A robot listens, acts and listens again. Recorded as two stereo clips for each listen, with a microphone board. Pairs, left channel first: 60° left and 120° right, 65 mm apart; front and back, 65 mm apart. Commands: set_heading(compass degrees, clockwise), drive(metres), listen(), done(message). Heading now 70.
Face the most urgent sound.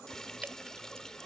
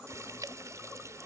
listen()
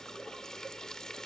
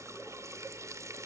listen()
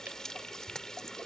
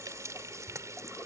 done("I can't make out anything urgent to turn to.")